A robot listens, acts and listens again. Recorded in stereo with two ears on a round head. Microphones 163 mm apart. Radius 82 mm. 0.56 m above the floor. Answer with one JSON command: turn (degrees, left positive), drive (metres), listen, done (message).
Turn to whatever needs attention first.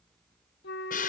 {"listen": true}
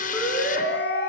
{"turn": 30}
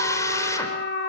{"listen": true}
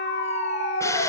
{"turn": 140}
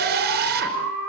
{"done": "Found it: a siren, straight ahead."}